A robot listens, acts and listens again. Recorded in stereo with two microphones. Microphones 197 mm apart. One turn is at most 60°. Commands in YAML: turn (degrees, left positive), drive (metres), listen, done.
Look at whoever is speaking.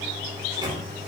listen: true
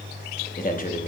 turn: 45
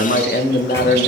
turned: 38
turn: 60
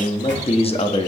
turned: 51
turn: 35
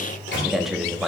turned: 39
done: "Facing the man speaking."